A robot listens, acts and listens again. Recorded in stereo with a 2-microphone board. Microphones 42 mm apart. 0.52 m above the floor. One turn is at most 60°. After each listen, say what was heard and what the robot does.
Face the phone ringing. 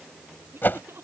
Keep listening.
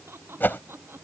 Keep listening.
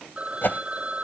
The phone ringing: about 30° right or 150° right. Turn 30° right.
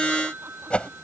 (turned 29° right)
So it is at 120° right. Turn 60° right.
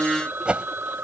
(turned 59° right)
The phone ringing is now 60° right. Turn 60° right.
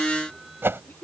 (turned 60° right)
Keep listening.
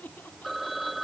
Found it: a phone ringing, straight ahead.